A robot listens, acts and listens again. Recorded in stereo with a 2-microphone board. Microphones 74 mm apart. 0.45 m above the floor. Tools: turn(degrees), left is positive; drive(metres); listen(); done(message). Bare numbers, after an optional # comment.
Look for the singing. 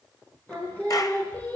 # The singing: about 20° left or 160° left.
turn(20)
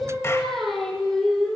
turn(30)
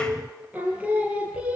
# So it is at 15° right.
turn(-15)
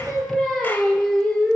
# The singing is now 10° left.
turn(10)
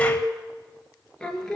# The singing is now 10° left.
turn(10)
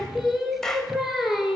done("Found it: singing, straight ahead.")